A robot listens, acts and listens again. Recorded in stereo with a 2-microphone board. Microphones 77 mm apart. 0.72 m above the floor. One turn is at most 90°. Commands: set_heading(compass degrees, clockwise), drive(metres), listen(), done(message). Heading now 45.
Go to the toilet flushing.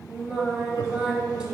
listen()
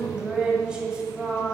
listen()
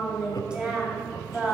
done("I can't make out a toilet flushing, only singing and laughter.")